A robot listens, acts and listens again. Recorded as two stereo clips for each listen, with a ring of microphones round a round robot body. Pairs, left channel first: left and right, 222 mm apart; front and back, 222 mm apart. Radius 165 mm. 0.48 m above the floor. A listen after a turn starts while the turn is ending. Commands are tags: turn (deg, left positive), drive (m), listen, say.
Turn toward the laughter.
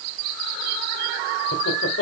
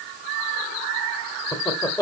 <turn deg="75"/>
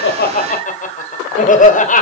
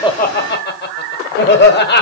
<turn deg="35"/>
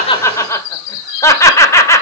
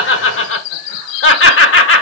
<turn deg="15"/>
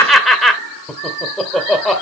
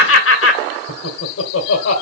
<say>Found it: laughter, straight ahead, 1 to 2 m away.</say>